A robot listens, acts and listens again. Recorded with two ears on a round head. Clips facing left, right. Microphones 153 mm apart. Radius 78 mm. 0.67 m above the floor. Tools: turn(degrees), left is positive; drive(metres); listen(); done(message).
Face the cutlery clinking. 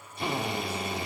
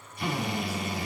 listen()
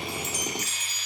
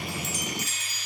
listen()
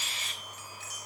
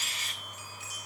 done("I can't make out cutlery clinking to turn to.")